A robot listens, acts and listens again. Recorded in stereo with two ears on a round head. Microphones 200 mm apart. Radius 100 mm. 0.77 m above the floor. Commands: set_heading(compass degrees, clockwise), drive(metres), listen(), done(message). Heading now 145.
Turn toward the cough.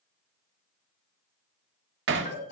set_heading(100)
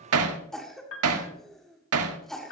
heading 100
done("Found it: a cough, straight ahead.")